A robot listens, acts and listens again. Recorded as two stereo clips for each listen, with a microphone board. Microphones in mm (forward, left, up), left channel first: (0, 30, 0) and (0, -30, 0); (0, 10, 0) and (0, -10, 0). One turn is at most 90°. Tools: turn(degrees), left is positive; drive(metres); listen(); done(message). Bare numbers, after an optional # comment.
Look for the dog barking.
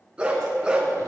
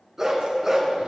# The dog barking: about 15° right or 165° right.
turn(-15)
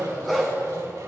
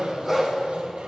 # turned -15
turn(30)
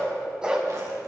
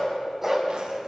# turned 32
# So it is at 15° right.
turn(-15)
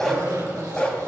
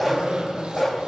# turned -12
# The dog barking is now 20° left.
turn(20)
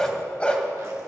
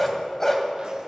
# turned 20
# The dog barking is now 20° left.
turn(20)
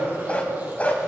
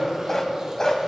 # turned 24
# The dog barking is now 25° left.
turn(25)
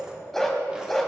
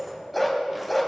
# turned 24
done("Facing the dog barking, 1 to 2 m away.")